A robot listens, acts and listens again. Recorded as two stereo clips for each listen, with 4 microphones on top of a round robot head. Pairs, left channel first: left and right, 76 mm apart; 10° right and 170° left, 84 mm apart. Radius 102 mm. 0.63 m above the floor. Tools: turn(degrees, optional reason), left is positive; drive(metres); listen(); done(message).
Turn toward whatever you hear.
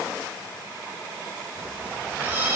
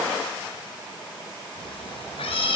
turn(degrees=-20, reason="The cat meowing: 20° right.")
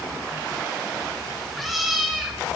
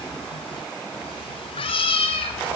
done("Found it: a cat meowing, straight ahead.")